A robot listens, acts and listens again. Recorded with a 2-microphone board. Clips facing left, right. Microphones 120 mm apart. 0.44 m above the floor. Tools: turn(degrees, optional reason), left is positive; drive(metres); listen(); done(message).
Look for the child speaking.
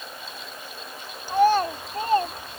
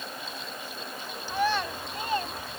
turn(degrees=45, reason="The child speaking: about 45° left or 135° left.")
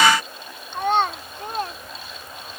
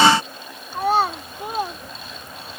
turn(degrees=-10, reason="So it is at 10° right.")
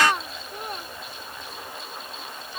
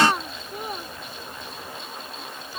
done("Facing the child speaking.")